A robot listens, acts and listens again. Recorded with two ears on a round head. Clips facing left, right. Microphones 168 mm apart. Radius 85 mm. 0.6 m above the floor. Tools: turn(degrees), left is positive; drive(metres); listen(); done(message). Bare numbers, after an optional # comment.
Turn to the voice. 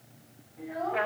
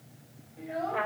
# The child speaking: about 35° right or 145° right.
turn(-35)
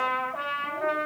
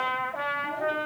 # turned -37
listen()
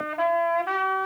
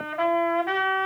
listen()
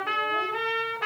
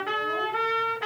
done("I heard a child speaking, but can't make it out now. It was about straight ahead or 105° right.")